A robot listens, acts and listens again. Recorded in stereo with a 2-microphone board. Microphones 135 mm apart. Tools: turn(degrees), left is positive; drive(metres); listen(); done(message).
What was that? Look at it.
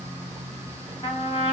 turn(degrees=45)
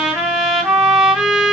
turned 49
done("Facing the trumpet, under 1 m away.")